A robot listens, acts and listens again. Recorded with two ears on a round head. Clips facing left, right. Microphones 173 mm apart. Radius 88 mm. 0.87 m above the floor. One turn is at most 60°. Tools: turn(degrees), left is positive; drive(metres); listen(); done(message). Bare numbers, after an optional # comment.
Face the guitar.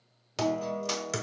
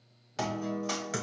# The guitar: about 40° left or 140° left.
turn(40)
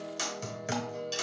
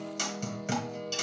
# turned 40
# So it is at 10° left.
turn(10)
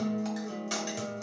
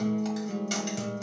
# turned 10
done("Facing the guitar, under 1 m away.")